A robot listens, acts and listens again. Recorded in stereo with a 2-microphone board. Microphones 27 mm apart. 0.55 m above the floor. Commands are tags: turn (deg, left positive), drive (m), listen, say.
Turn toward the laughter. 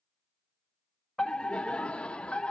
<turn deg="45"/>
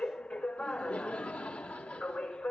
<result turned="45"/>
<turn deg="80"/>
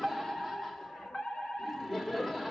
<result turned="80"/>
<turn deg="10"/>
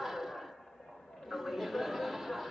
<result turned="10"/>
<say>Found it: laughter, straight ahead.</say>